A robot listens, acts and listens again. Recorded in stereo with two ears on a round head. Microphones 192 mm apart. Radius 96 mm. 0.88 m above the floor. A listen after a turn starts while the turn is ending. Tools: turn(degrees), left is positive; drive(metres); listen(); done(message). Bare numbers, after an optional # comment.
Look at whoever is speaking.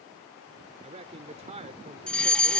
# The man speaking: about 30° right or 150° right.
turn(-30)
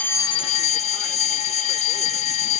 listen()
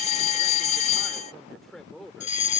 done("Facing the man speaking.")